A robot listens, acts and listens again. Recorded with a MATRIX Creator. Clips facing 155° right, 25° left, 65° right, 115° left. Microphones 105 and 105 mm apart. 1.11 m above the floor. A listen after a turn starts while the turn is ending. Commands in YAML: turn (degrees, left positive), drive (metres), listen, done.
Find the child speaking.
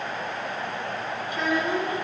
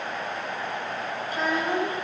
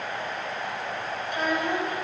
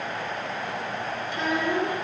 turn: -30
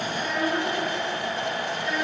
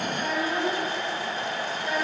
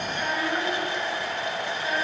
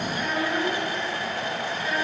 turn: -10
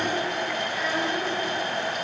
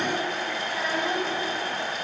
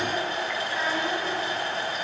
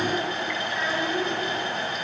done: "Found it: a child speaking, straight ahead."